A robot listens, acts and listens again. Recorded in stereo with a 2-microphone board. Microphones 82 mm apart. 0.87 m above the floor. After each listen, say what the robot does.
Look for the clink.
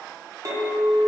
Turn 45° right.
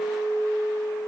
Facing the clink, 1 to 2 m away.